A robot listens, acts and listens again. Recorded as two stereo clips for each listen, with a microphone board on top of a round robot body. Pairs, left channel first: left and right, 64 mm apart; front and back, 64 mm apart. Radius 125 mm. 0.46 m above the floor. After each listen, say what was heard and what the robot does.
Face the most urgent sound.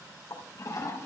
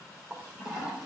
Keep listening.
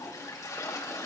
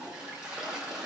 Keep listening.
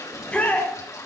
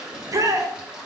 The shout: 160° left. Turn 160° left.
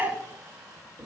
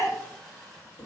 The shout is now 30° right. Turn 30° right.
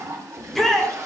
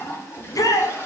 Facing the shout, 2 to 4 m away.